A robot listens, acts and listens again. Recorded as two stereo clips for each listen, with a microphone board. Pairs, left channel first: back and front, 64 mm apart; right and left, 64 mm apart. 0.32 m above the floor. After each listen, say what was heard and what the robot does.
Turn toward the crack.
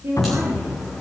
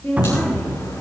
The crack: 95° right. Turn 95° right.
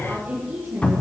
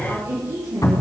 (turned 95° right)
I heard a crack from this way, but can't make it out now.